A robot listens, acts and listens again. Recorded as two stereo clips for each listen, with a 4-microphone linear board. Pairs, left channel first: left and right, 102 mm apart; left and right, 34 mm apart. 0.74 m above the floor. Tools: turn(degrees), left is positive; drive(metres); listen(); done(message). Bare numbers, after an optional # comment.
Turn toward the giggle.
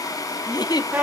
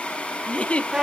# The giggle: about 40° left or 140° left.
turn(40)
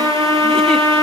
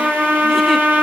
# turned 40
listen()
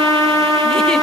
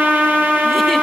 listen()
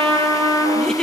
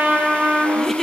# So it is at 10° left.
turn(10)
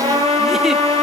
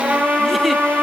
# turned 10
listen()
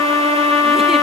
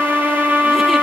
listen()
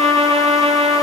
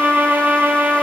done("I heard a giggle from this way, but can't make it out now.")